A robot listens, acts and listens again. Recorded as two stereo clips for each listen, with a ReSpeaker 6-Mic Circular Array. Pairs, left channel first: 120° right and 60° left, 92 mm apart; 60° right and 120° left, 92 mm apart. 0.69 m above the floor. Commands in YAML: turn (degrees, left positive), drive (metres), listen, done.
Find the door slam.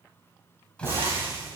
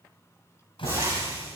turn: -40
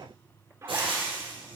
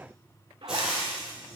done: "Facing where the door slam came from. I can't hear it now."